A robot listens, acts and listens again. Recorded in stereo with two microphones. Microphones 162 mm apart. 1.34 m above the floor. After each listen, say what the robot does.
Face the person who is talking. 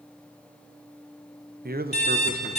Turn 70° right.
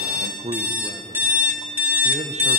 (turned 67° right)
Turn 45° right.
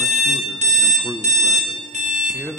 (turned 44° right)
Found it: a man speaking, straight ahead.